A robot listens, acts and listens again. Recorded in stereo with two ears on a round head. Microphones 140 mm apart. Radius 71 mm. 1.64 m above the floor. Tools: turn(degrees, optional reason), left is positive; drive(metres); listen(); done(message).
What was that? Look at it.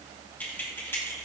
turn(degrees=20, reason="The keys jangling: about 20° left or 160° left.")
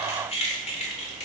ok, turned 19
turn(degrees=130, reason="So it is at 130° left.")
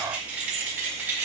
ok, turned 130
turn(degrees=-15, reason="The keys jangling is now 15° right.")
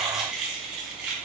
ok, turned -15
done("Found it: keys jangling, straight ahead.")